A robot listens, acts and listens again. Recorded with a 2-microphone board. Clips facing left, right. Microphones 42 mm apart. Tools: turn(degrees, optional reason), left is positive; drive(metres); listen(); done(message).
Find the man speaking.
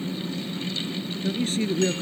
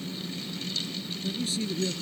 turn(degrees=40, reason="The man speaking: about 40° left or 140° left.")
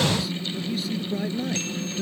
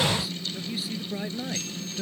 turn(degrees=-10, reason="So it is at 10° right.")
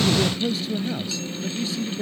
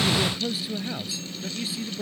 turn(degrees=-10, reason="The man speaking is now 10° right.")
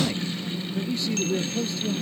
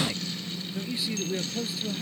done("Found it: a man speaking, straight ahead.")